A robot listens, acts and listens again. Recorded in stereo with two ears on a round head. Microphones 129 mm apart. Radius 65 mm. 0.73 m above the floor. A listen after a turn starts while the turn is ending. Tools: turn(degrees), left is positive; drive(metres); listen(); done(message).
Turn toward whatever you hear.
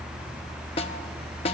turn(degrees=40)
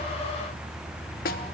turn(degrees=95)
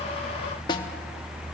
turn(degrees=30)
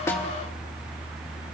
listen()
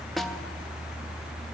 done("Found it: a snare drum, straight ahead.")